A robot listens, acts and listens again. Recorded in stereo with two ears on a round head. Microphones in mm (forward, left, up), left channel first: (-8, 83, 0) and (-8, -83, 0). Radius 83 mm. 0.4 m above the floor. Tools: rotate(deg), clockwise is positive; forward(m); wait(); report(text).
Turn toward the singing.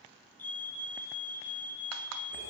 wait()
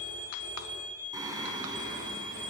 rotate(20)
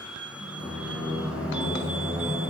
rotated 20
rotate(30)
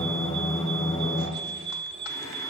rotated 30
rotate(-20)
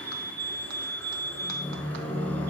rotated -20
rotate(-10)
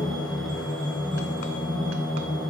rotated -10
report("Facing the singing, over 4 m away.")